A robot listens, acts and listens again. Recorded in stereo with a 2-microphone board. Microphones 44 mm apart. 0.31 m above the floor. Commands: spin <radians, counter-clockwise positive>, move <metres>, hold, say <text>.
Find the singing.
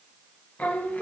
spin 0.70
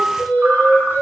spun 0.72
spin 1.92
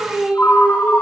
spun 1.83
spin -0.35
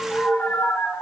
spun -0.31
say Facing the singing.